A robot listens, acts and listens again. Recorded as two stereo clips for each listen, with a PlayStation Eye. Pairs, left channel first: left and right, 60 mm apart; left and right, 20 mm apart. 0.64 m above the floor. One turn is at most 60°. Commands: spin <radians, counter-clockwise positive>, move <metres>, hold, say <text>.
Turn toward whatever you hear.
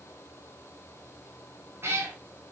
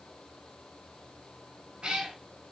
spin -0.79
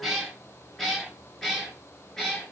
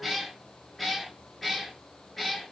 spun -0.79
spin 0.17
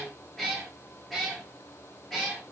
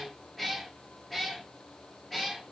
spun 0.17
say Facing the cat meowing, over 4 m away.